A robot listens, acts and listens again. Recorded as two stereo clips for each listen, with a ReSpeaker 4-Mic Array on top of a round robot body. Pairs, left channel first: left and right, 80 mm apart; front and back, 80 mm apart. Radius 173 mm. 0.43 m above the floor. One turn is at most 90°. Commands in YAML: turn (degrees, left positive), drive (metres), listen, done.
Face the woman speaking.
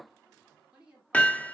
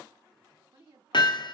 turn: -90
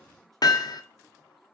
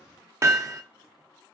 turn: -75
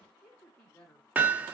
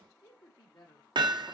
turn: 20
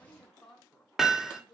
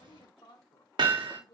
done: "Found it: a woman speaking, straight ahead, 1 to 2 m away."